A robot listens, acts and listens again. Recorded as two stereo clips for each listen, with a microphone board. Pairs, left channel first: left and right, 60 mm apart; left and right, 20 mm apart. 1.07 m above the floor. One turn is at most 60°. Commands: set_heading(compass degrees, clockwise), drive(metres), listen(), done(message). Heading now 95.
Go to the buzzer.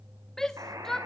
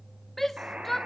set_heading(155)
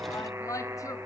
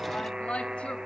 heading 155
set_heading(200)
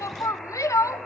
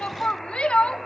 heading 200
listen()
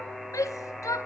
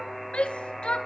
drive(1.0)
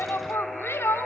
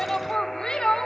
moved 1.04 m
drive(1.0)
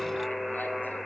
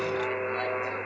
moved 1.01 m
drive(1.0)
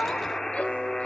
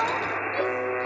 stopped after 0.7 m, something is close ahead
set_heading(190)
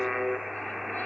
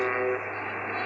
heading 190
done("I am next to the buzzer.")